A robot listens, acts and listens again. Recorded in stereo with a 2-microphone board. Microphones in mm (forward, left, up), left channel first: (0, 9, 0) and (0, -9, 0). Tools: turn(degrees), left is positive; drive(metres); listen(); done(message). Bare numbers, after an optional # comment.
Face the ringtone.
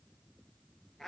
listen()
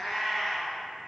listen()
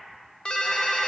# The ringtone: about 55° left or 125° left.
turn(55)
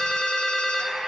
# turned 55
# So it is at 70° left.
turn(70)
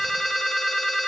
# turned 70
# The ringtone is now 10° right.
turn(-10)
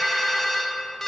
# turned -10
done("Facing the ringtone, under 1 m away.")